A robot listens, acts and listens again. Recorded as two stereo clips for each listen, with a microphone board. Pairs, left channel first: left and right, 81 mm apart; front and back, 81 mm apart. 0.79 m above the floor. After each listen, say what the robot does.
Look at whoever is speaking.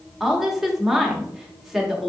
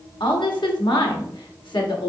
Found it: a woman speaking, straight ahead.